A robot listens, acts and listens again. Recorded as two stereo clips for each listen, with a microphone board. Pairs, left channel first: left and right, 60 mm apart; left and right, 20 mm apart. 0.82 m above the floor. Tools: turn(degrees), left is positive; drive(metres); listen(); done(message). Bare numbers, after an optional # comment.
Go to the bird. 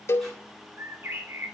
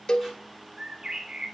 # The bird: about 40° right or 140° right.
turn(-40)
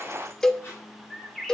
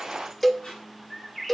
drive(1.0)
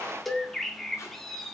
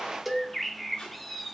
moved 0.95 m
drive(1.0)
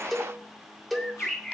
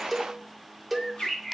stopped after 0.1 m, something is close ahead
done("I am next to the bird.")